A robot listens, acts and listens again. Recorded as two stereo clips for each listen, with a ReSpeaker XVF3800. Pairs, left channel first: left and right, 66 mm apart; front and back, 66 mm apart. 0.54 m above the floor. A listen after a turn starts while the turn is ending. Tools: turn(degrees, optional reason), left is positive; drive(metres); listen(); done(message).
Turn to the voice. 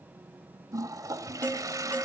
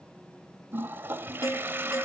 listen()
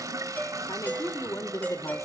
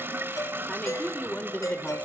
turn(degrees=65, reason="The woman speaking: 65° left.")
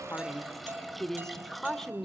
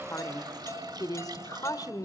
done("Facing the woman speaking.")